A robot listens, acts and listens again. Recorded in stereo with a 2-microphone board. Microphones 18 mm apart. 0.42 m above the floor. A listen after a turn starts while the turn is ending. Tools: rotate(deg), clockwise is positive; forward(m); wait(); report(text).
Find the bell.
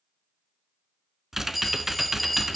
rotate(-30)
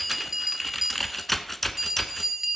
rotate(25)
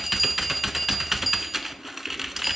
report("Found it: a bell, straight ahead, 1 to 2 m away.")